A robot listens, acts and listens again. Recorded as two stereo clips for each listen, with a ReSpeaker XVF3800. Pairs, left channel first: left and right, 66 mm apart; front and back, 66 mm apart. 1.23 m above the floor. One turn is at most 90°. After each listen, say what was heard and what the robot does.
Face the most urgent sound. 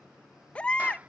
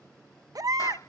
The baby crying: 160° left. Turn 90° left.
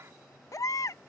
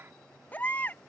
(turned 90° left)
The baby crying is now 60° left. Turn 60° left.
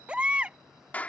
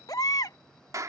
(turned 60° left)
The baby crying is now 15° right. Turn 15° right.
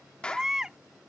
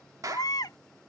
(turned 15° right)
The baby crying is now 10° right. Turn 10° right.
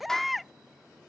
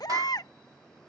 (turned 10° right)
Facing the baby crying.